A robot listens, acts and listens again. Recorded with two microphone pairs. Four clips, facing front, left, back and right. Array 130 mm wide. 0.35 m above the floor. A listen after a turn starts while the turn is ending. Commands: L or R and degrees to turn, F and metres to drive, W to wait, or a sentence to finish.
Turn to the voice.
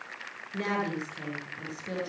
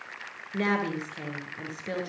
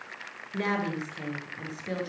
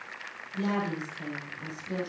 L125
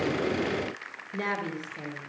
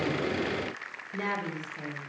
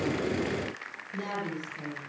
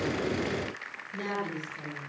L15
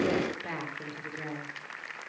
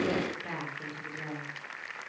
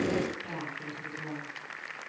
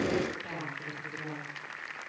Found it: a woman speaking, straight ahead.